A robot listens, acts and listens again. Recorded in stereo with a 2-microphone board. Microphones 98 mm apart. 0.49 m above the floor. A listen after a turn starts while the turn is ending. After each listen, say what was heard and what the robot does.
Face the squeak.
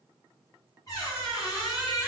The squeak: about 40° left or 140° left. Turn 40° left.
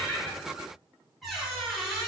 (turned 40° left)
Facing the squeak, 1 to 2 m away.